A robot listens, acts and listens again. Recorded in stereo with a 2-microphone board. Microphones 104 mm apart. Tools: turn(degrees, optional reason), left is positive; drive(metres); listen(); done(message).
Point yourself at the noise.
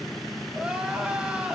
turn(degrees=-30)
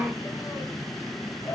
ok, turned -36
turn(degrees=25, reason="So it is at 25° left.")
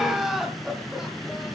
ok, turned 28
done("Found it: crying, straight ahead.")